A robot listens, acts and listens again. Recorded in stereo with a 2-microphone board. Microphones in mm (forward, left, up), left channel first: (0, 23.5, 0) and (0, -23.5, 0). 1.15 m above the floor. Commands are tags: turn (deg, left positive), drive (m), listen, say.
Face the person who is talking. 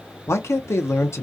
<turn deg="65"/>
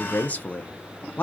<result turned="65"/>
<turn deg="35"/>
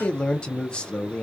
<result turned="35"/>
<turn deg="25"/>
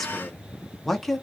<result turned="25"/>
<say>Facing the man speaking.</say>